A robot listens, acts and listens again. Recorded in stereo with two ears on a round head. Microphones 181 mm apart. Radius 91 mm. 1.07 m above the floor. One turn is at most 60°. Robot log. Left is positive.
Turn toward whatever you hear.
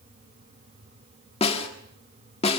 note: The snare drum: about 30° left or 150° left.
cmd yaw +30
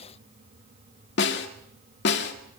note: So it is at 120° left.
cmd yaw +60
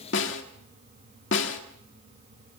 note: The snare drum is now 65° left.
cmd yaw +60
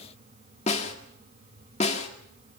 note: The snare drum is now 35° left.
cmd yaw +35
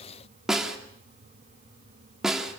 end: Found it: a snare drum, straight ahead.